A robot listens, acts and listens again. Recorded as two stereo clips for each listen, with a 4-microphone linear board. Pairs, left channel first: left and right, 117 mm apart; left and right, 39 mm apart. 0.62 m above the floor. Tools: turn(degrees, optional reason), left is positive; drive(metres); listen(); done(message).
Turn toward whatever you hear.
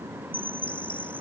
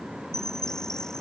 turn(degrees=30)
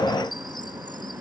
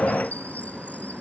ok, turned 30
turn(degrees=140, reason="So it is at 140° left.")
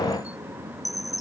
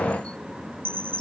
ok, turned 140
turn(degrees=30, reason="The chime is now 30° left.")
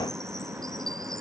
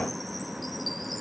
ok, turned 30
listen()
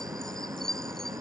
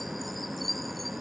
done("Facing the chime.")